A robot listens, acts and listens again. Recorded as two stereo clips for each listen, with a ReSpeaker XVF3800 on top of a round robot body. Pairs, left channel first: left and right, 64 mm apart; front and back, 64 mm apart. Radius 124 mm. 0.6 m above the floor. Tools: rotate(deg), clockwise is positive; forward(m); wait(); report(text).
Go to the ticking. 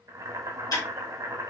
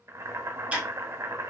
rotate(-115)
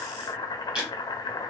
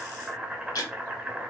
rotate(10)
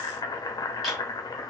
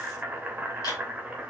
wait()
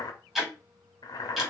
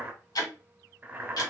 forward(1.0)
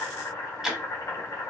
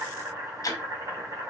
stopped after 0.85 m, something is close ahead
report("Arrived at the ticking, straight ahead.")